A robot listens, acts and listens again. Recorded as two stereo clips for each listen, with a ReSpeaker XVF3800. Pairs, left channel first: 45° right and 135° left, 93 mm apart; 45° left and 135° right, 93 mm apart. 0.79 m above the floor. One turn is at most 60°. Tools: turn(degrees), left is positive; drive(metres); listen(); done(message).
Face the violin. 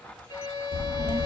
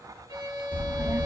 turn(degrees=-60)
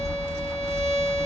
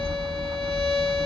turn(degrees=-40)
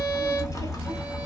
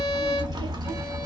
listen()
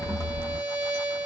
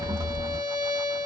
done("Facing the violin, 2 to 4 m away.")